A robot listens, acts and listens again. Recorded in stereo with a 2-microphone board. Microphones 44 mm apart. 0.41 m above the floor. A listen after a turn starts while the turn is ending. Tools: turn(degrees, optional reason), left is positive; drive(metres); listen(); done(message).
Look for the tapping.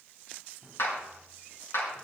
listen()
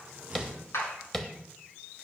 turn(degrees=30)
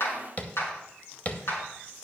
turn(degrees=145, reason="So it is at 145° left.")
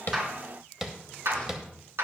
done("Found it: tapping, straight ahead.")